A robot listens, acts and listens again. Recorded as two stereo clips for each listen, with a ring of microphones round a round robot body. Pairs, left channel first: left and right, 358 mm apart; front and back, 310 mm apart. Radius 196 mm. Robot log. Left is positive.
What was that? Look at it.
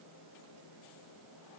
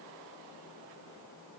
cmd idle
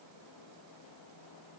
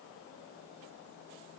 cmd idle
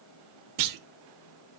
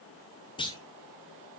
note: The clunk: 75° right.
cmd yaw -75
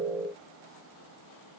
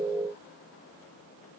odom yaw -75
end: I heard a clunk from this way, but can't make it out now.